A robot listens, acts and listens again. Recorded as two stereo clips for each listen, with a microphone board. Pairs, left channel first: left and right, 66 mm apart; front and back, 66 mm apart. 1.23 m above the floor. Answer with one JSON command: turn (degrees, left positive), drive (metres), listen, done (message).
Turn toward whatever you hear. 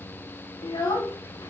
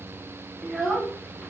{"turn": 90}
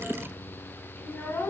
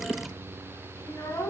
{"turn": 35}
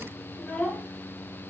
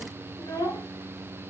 {"turn": 20}
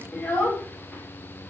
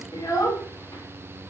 {"turn": 20}
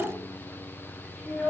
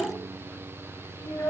{"done": "Facing the child speaking."}